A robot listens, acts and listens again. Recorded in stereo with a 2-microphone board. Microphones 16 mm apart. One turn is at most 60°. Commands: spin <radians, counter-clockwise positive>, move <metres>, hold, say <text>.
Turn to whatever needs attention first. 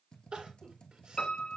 spin -1.05
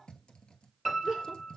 spin -0.61
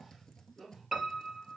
spin -0.26
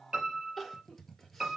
say Found it: crying, straight ahead, 2 to 4 m away.